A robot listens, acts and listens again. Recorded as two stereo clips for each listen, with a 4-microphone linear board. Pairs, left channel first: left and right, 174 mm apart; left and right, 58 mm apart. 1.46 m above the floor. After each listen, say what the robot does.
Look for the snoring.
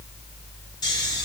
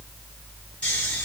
Turn 20° left.
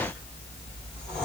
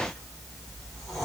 Found it: snoring, straight ahead, 1 to 2 m away.